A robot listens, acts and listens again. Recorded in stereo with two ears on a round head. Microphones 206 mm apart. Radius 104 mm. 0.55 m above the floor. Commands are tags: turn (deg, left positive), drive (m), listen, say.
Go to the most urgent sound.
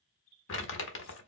<listen/>
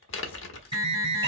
<turn deg="-25"/>
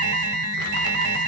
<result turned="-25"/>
<turn deg="-130"/>
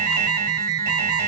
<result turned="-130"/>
<turn deg="-45"/>
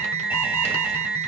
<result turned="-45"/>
<turn deg="-10"/>
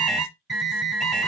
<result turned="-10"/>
<drive m="1.0"/>
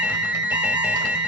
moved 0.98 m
<drive m="1.0"/>
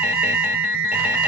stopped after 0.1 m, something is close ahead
<say>Arrived at the alarm, straight ahead.</say>